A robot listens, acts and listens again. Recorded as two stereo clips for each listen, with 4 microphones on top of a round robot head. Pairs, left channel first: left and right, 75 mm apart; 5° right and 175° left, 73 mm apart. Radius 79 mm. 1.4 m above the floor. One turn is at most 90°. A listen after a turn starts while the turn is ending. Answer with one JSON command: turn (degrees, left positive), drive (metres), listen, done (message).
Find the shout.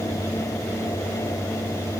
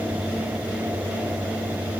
{"listen": true}
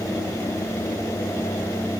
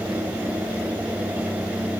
{"listen": true}
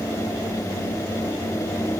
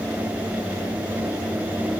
{"done": "I can't make out a shout to turn to."}